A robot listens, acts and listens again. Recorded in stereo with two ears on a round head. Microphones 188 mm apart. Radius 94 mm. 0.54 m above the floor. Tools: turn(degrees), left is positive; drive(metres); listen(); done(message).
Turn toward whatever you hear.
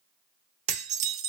turn(degrees=-35)
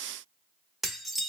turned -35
done("Found it: dishes clattering, straight ahead, under 1 m away.")